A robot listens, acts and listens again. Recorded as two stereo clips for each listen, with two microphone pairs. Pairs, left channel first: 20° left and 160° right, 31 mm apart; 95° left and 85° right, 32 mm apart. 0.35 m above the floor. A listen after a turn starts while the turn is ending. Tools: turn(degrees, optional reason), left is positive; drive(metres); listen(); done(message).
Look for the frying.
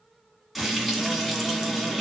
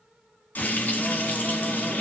turn(degrees=120, reason="The frying: 120° left.")
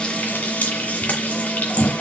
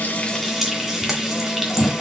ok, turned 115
done("Found it: frying, straight ahead.")